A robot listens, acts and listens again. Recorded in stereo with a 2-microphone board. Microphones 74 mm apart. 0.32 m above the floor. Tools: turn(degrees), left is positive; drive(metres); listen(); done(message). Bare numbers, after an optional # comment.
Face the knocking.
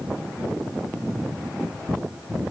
listen()
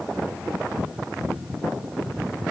listen()
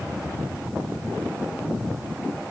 done("I can't make out knocking to turn to.")